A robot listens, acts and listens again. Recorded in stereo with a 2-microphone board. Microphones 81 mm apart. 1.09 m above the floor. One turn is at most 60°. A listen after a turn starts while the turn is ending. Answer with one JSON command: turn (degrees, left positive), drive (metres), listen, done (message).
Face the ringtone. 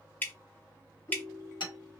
{"turn": 40}
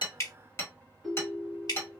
{"done": "Found it: a ringtone, straight ahead, 1 to 2 m away."}